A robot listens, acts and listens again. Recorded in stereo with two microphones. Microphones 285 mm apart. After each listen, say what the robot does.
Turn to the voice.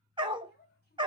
Turn 35° left.
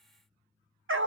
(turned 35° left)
Keep listening.
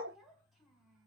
Found it: a child speaking, straight ahead.